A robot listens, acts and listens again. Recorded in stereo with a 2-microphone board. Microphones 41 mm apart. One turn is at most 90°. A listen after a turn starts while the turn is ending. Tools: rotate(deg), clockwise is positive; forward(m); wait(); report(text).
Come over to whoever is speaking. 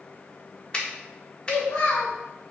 rotate(-75)
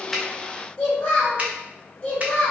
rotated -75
rotate(-30)
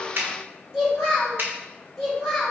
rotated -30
forward(1.0)
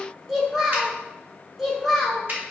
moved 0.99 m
forward(1.0)
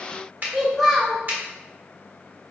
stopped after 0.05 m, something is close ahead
report("Arrived at the child speaking, straight ahead.")